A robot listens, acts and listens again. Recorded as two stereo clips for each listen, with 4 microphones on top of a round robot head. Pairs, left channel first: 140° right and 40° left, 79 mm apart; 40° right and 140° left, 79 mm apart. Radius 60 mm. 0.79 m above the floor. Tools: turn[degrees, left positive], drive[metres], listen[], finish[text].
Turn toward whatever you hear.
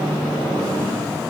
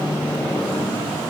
Action: listen[]
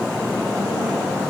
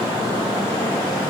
Action: listen[]
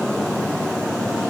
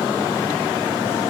Action: finish[I can't make out anything.]